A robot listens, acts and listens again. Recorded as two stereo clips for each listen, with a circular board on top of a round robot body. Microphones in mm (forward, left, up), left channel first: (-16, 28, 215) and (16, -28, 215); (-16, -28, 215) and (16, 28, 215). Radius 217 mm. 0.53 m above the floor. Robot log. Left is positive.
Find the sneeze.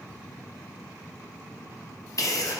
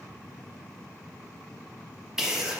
note: The sneeze: 140° left.
cmd yaw +140
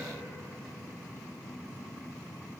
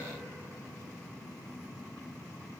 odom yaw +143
end: I heard a sneeze from this way, but can't make it out now.